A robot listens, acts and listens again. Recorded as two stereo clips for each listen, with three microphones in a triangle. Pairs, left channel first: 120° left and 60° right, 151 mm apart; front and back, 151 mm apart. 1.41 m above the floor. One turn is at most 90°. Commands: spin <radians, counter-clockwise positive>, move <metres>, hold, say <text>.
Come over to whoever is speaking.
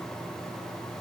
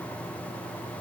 hold
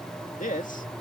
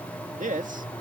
spin 1.57
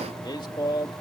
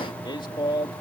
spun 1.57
spin 1.05
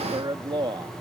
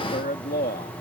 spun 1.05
move 1.0
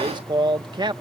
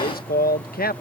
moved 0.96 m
move 1.0
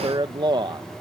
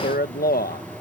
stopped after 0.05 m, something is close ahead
say I am next to the man speaking.